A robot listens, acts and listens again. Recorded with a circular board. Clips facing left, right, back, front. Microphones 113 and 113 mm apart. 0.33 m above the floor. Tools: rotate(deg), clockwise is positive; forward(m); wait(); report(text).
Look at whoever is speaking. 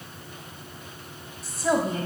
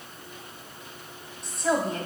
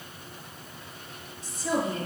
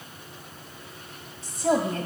report("Found it: a woman speaking, straight ahead.")